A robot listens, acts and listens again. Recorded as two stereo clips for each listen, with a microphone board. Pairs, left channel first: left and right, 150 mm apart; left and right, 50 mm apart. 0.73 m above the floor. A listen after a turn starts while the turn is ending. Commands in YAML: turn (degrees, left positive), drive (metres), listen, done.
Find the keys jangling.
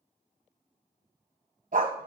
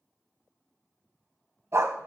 listen: true
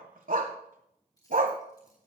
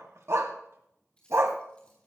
turn: 25
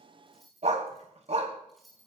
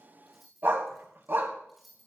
done: "Facing the keys jangling, over 4 m away."